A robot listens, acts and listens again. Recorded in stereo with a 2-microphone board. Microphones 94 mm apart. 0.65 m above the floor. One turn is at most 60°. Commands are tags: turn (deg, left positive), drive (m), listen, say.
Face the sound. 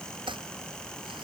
<turn deg="-60"/>
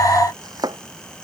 <turn deg="-50"/>
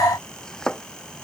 <turn deg="10"/>
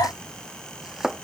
<say>Facing the chopping.</say>